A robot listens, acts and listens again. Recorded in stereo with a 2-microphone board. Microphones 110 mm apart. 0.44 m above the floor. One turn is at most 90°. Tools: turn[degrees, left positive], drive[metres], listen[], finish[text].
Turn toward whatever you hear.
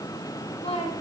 Thought: The woman speaking: about 65° left or 115° left.
Action: turn[65]
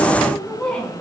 Thought: So it is at 10° left.
Action: turn[10]
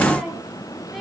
Action: finish[Found it: a woman speaking, straight ahead, over 4 m away.]